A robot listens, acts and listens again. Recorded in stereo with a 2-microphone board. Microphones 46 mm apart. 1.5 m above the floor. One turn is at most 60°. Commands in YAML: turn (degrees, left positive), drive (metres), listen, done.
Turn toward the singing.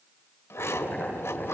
listen: true
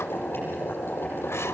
listen: true
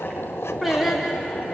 turn: -30
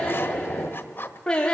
turn: 20
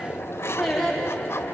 done: "Found it: singing, straight ahead."